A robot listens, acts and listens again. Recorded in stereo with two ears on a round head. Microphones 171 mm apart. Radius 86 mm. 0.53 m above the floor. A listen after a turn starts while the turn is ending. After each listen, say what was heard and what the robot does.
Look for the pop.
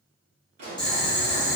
The pop: about 35° right or 145° right. Turn 35° right.
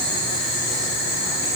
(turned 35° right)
Keep listening.
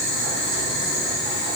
I heard a pop, but can't make it out now. It was about straight ahead or 110° right.